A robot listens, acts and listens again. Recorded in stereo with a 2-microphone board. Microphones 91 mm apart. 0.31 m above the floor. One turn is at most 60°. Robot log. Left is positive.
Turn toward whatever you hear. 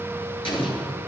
cmd yaw +60
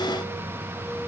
note: Nothing new. It was at 30° left.
cmd yaw +30
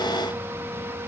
end: I heard an explosion from this way, but can't make it out now.